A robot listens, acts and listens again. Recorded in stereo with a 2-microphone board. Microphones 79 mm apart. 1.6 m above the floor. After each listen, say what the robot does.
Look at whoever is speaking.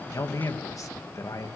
Turn 45° left.
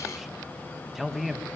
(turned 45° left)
Found it: a man speaking, straight ahead, 1 to 2 m away.